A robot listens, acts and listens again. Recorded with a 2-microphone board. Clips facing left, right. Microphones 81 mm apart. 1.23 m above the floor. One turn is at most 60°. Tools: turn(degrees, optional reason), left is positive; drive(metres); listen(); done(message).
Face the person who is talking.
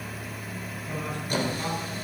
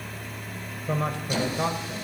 turn(degrees=-55, reason="The man speaking: about 55° right or 125° right.")
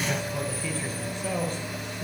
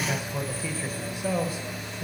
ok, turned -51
done("Found it: a man speaking, straight ahead, 1 to 2 m away.")